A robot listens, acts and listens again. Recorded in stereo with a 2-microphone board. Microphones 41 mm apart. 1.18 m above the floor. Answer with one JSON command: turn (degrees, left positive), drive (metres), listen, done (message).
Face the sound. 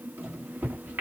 {"turn": -65}
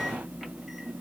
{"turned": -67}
{"done": "Found it: a microwave, straight ahead."}